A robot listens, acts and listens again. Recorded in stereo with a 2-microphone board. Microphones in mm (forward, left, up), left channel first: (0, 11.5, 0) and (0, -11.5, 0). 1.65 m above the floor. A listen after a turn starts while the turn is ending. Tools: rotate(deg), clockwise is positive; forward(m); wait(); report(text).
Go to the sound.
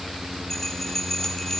rotate(-20)
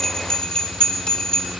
rotate(-135)
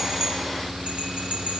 rotate(50)
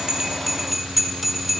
forward(1.0)
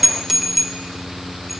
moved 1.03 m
rotate(10)
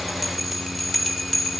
forward(1.0)
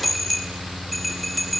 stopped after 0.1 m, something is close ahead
report("I am next to the bell.")